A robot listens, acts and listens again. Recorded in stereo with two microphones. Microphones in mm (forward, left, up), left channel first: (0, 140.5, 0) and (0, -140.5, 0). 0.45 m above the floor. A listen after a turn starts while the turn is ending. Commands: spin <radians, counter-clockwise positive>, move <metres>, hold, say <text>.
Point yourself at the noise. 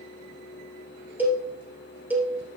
spin -0.52
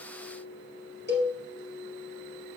spin -2.44
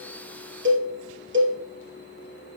spin -0.79
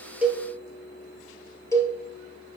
spin 0.17
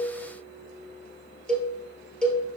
say Found it: a cowbell, straight ahead.